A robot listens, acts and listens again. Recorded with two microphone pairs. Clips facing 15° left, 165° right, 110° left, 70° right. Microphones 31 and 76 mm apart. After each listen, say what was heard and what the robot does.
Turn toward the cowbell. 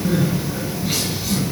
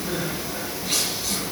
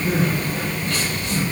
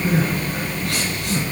Keep listening.
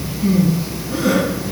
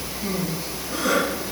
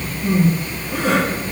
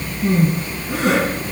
Keep listening.
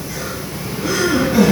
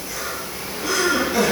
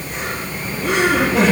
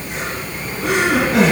I can't make out a cowbell to turn to.